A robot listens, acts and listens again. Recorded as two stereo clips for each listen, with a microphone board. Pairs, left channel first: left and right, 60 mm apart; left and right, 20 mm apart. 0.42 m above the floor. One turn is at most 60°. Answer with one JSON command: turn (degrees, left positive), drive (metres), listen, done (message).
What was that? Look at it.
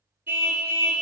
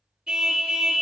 {"turn": -35}
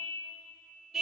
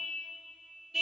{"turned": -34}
{"done": "Facing the car horn."}